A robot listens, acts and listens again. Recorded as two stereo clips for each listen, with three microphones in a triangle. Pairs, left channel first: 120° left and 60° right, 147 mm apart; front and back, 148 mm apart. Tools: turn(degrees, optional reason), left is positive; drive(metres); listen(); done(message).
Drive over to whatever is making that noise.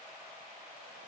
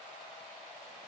listen()
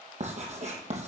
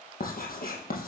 turn(degrees=-20, reason="The writing: 20° right.")
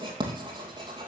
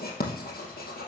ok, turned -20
drive(metres=1.0)
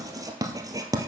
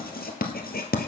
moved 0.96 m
drive(metres=1.0)
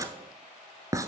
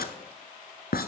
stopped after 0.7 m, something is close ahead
turn(degrees=10, reason="The writing is now 10° left.")
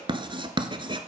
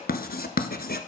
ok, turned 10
done("I am next to the writing.")